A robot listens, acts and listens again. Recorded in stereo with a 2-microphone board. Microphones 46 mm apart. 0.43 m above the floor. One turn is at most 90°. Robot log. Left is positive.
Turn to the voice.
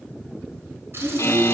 note: The child speaking: about 35° right or 145° right.
cmd yaw -35
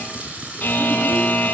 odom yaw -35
cmd idle
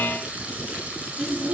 note: So it is at 105° right.
cmd yaw -90
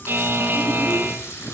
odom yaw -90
note: Nothing new. It was at 15° right.
cmd yaw -15
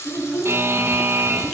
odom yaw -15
end: Facing the child speaking, 2 to 4 m away.